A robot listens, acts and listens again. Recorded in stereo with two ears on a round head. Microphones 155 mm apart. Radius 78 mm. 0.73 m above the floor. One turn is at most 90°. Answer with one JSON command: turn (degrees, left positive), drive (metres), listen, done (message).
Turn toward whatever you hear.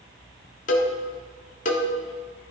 {"turn": 45}
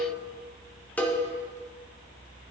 {"turn": 10}
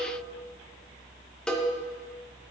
{"done": "Found it: a cowbell, straight ahead, 1 to 2 m away."}